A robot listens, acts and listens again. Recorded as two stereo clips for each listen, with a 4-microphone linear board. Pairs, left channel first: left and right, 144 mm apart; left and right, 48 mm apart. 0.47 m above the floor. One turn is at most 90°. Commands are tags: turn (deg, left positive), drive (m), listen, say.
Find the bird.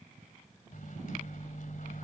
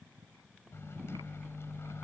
<listen/>
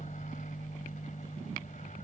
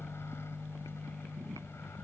<listen/>
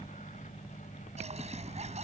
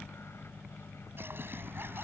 <turn deg="-50"/>
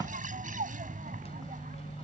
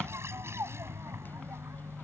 <turn deg="-75"/>
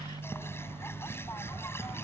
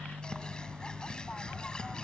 <turn deg="20"/>
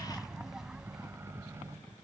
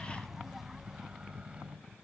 <say>Found it: a bird, straight ahead.</say>